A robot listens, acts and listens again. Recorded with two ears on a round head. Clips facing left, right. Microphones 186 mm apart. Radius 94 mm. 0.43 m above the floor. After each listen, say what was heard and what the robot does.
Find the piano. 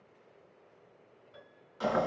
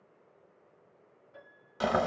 The piano: about 40° left or 140° left. Turn 40° left.
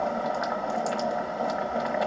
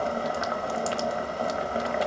Keep listening.
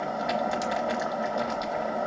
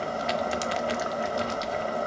Keep listening.
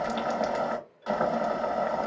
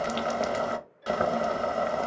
Facing the piano.